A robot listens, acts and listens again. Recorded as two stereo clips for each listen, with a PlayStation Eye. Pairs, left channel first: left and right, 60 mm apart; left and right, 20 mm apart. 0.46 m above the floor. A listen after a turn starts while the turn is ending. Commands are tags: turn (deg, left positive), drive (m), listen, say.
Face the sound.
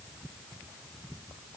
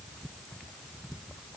<listen/>
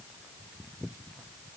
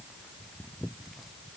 <listen/>
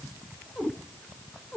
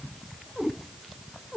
<turn deg="15"/>
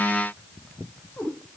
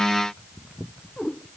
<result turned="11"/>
<turn deg="150"/>
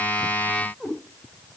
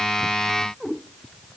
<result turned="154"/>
<say>Facing the cat meowing, over 4 m away.</say>